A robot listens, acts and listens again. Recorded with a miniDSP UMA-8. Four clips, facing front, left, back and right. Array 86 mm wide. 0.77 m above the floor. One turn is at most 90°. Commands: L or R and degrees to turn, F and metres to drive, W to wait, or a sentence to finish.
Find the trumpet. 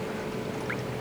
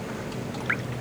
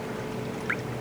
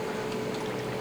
W
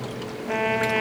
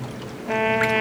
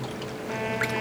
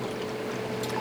L65
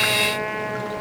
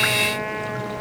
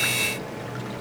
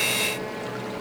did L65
W
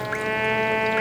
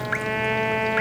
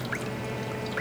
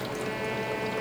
L35
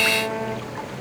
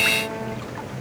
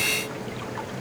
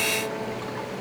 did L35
W
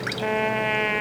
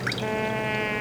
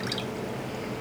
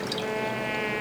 Found it: a trumpet, straight ahead.